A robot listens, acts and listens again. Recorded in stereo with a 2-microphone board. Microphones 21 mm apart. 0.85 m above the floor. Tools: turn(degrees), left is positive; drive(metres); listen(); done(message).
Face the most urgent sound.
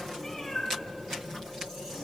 listen()
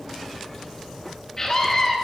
turn(degrees=25)
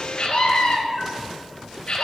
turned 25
turn(degrees=135)
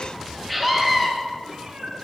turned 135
done("Facing the scream, 2 to 4 m away.")